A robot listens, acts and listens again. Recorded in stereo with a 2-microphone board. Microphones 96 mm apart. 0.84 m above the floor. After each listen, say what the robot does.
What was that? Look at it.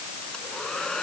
Turn 30° left.
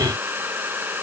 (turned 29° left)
Turn 20° right.
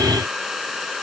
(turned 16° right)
Facing the hair dryer.